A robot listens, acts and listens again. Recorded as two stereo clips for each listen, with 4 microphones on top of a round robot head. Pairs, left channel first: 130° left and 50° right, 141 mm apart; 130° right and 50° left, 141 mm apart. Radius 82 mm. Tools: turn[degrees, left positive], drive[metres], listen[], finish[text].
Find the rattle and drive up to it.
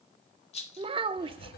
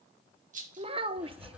Thought: The rattle: 85° left.
Action: turn[85]
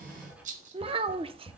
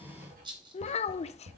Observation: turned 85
Thought: The rattle is now 10° right.
Action: turn[-10]
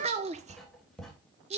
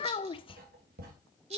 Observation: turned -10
Action: drive[1.0]
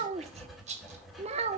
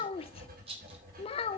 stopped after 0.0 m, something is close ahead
Action: finish[Something is in my way. I am facing the rattle but have not reached it.]